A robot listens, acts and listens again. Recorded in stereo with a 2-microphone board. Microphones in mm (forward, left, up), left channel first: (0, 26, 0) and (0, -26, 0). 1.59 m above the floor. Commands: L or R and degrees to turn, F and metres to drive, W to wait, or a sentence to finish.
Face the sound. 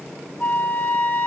L30
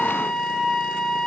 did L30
Facing the flute.